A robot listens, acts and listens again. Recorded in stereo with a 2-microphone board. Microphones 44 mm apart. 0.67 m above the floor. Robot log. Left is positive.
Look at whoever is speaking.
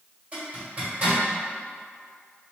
cmd idle
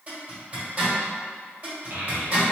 note: The child speaking: about 55° right or 125° right.
cmd yaw -55
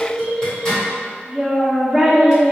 note: So it is at 15° right.
cmd yaw -15
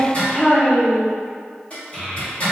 end: Found it: a child speaking, straight ahead, under 1 m away.